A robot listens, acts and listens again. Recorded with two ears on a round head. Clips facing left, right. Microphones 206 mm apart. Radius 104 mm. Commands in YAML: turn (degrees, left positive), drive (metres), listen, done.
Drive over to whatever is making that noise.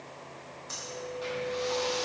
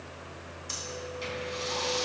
turn: -40
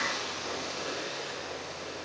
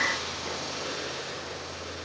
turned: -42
listen: true
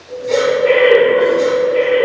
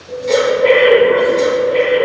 turn: -95
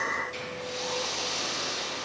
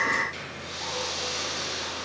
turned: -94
drive: 1.0
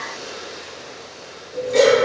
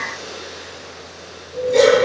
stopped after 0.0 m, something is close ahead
done: "Something is in my way. I am facing the breathing but have not reached it."